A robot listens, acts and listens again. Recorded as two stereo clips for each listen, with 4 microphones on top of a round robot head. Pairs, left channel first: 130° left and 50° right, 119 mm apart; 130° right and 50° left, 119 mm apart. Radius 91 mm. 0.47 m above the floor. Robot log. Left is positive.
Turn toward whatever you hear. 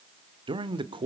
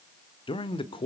note: The man speaking: 90° right.
cmd yaw -90
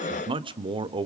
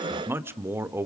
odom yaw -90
note: The man speaking is now 15° right.
cmd yaw -15
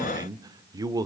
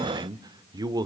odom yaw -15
end: Found it: a man speaking, straight ahead.